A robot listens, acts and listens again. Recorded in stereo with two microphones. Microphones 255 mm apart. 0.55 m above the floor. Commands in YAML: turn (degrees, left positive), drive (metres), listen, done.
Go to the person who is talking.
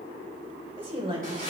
turn: -20
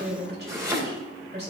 turn: -135
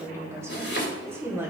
turn: -10
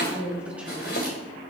drive: 1.0
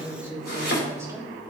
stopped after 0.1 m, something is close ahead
turn: -10
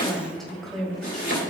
done: "Something is in my way. I am facing the woman speaking but have not reached it."